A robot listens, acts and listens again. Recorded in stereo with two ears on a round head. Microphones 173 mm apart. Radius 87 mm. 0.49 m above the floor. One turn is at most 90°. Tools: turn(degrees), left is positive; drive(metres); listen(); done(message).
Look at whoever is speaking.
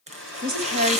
turn(degrees=-50)
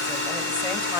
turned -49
done("Facing the woman speaking.")